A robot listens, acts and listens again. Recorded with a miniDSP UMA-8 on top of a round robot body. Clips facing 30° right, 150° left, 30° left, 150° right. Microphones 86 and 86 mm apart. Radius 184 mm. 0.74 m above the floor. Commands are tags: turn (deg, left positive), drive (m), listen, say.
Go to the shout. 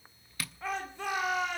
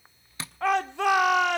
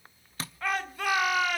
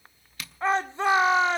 <turn deg="150"/>
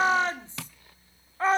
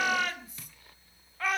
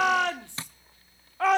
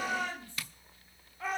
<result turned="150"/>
<turn deg="30"/>
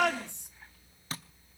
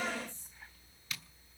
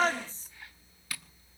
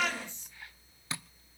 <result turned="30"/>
<turn deg="-25"/>
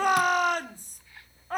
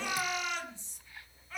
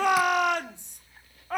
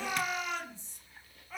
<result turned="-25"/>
<drive m="1.0"/>
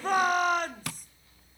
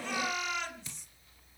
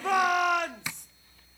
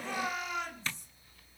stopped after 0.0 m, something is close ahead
<turn deg="10"/>
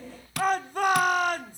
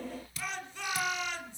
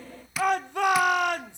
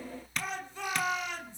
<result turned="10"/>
<say>Something is in my way. I am facing the shout but have not reached it.</say>